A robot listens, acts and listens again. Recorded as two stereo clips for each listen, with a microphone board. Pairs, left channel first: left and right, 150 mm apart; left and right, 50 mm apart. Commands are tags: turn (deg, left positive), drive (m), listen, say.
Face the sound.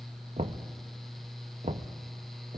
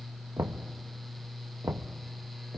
<turn deg="-50"/>
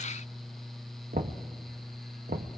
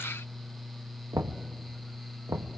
<turn deg="-75"/>
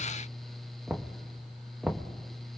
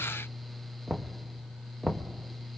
<say>Found it: knocking, straight ahead.</say>